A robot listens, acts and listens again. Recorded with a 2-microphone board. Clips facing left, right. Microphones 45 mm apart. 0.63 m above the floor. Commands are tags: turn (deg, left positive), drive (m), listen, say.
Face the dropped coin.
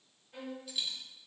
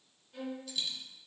<turn deg="30"/>
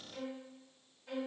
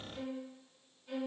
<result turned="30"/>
<listen/>
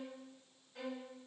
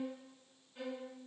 <say>I heard a dropped coin, but can't make it out now. It was about 20° right or 140° left.</say>